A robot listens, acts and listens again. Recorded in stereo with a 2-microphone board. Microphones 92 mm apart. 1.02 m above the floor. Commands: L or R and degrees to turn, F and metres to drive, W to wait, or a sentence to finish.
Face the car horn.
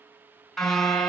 L30
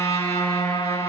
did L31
L145
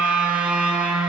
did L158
R10
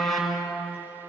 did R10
Facing the car horn.